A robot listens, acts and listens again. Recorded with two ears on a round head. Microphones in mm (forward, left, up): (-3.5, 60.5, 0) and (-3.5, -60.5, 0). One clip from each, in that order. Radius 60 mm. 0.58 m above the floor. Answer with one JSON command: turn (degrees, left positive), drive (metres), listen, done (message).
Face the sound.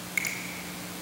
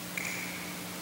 {"turn": 70}
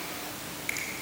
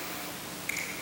{"turn": 20}
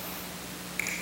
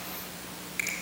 {"done": "Found it: a finger snap, straight ahead, 2 to 4 m away."}